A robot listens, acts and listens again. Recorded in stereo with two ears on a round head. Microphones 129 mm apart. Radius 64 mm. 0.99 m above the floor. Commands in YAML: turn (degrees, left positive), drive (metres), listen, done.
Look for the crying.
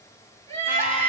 turn: 15
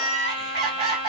turn: 150
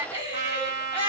turn: -15
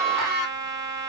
done: "Facing the crying, 2 to 4 m away."